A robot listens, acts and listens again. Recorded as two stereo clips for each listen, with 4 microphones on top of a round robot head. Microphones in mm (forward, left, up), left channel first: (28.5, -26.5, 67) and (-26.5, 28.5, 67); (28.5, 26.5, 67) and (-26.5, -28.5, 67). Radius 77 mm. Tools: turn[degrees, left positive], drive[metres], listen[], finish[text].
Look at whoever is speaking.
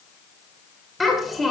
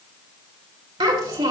Thought: The child speaking: 135° right.
Action: turn[-135]
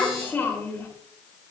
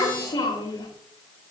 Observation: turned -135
Thought: The child speaking is now 20° left.
Action: turn[20]
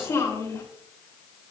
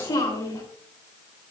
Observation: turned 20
Action: finish[Facing the child speaking.]